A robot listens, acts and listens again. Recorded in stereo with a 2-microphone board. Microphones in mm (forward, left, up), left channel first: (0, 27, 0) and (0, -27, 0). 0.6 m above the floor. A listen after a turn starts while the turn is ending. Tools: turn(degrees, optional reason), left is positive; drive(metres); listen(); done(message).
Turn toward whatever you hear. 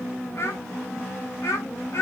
turn(degrees=60, reason="The child speaking: about 60° left or 120° left.")
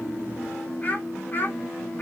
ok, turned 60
turn(degrees=35, reason="So it is at 35° left.")
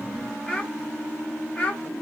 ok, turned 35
turn(degrees=25, reason="The child speaking is now 25° left.")
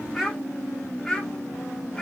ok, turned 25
done("Found it: a child speaking, straight ahead, 1 to 2 m away.")